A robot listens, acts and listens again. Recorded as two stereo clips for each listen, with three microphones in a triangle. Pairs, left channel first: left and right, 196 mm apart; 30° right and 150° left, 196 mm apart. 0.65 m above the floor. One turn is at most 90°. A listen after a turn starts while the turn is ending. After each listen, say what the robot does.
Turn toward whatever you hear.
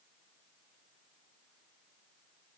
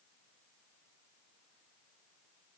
Keep listening.
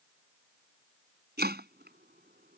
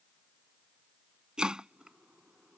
Turn 90° right.
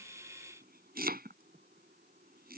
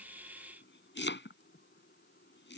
Turn 50° right.
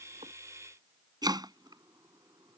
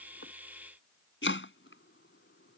Turn 20° right.
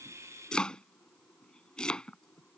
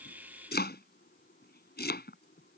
Facing the chopping.